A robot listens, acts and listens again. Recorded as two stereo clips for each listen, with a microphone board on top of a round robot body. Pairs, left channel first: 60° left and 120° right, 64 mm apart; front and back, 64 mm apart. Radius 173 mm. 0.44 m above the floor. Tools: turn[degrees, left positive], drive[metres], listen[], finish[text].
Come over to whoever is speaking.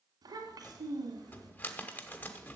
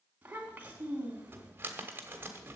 Thought: The child speaking: 115° right.
Action: turn[-115]
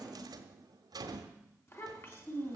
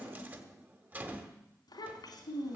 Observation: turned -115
Action: drive[1.0]
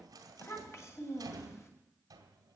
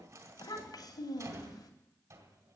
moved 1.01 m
Thought: The child speaking is now 10° left.
Action: turn[10]
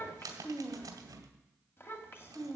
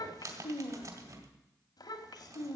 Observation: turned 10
Action: drive[1.0]
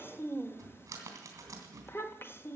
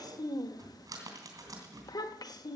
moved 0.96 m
Action: drive[1.0]
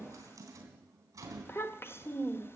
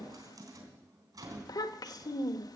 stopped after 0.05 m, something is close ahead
Action: finish[Arrived at the child speaking, straight ahead.]